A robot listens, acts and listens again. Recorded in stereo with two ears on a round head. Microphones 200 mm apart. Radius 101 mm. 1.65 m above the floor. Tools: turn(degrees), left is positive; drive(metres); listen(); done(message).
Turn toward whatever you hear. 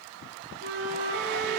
turn(degrees=-50)
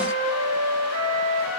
turn(degrees=-80)
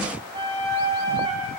turn(degrees=-20)
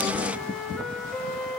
done("Facing the flute, 2 to 4 m away.")